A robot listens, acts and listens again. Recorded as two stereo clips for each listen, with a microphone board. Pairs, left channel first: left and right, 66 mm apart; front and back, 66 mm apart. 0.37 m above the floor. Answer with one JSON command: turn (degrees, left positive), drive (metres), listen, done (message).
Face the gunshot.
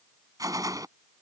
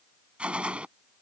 {"turn": -105}
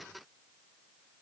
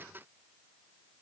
{"done": "I heard a gunshot from this way, but can't make it out now."}